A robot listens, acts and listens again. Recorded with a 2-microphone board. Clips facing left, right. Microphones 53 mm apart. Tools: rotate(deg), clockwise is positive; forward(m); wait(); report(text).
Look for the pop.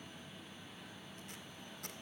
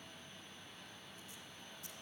wait()
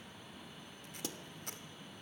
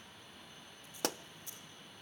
rotate(70)
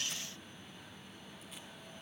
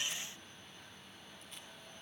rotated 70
wait()
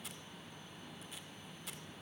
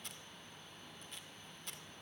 report("I heard a pop, but can't make it out now. It was about straight ahead or 40° right.")